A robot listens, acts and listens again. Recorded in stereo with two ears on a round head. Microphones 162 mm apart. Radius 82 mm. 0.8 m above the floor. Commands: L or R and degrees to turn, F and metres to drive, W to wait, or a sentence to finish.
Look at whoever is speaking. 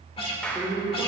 L30
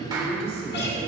L140
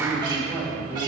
R10
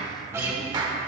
W
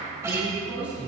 R10
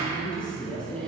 Facing the woman speaking.